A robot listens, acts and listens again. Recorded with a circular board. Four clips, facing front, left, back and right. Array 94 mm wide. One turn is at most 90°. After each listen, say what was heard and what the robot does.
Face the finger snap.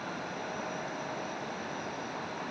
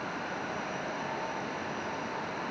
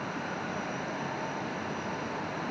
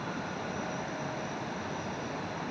Keep listening.
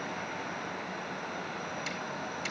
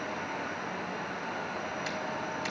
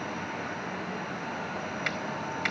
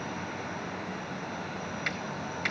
The finger snap: 150° right. Turn 90° right.
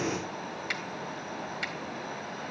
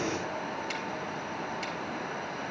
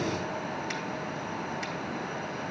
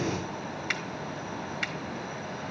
The finger snap is now 75° right. Turn 75° right.
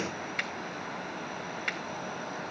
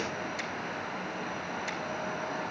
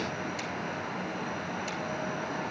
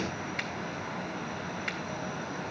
The finger snap is now 30° right. Turn 30° right.
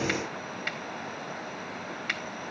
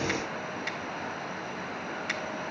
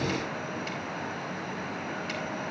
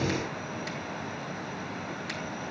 The finger snap is now 20° left. Turn 20° left.
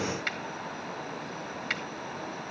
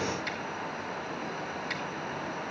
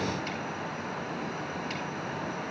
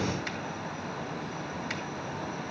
Facing the finger snap, 1 to 2 m away.